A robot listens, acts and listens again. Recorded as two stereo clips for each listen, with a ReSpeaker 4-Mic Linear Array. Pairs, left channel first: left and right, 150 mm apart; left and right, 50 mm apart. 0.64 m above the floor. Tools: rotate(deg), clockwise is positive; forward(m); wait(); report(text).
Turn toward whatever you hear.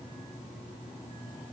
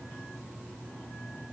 wait()
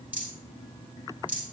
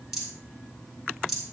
rotate(30)
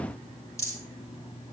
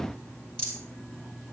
rotate(-20)
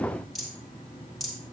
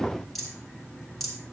report("Found it: a rattle, straight ahead.")